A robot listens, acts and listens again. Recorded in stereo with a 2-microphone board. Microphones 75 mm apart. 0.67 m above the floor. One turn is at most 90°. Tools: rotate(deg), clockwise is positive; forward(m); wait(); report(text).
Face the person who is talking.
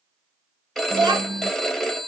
rotate(75)
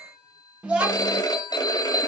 rotate(15)
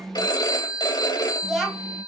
report("Found it: a child speaking, straight ahead.")